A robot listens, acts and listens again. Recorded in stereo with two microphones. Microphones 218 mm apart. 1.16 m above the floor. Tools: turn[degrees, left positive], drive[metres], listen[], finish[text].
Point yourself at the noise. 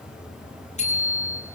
Thought: The bicycle bell: about 30° left or 150° left.
Action: turn[30]
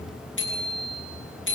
Thought: So it is at 120° left.
Action: turn[120]
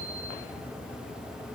Action: listen[]
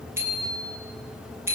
Thought: The bicycle bell is now 10° right.
Action: turn[-10]
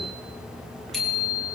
Action: finish[Found it: a bicycle bell, straight ahead, over 4 m away.]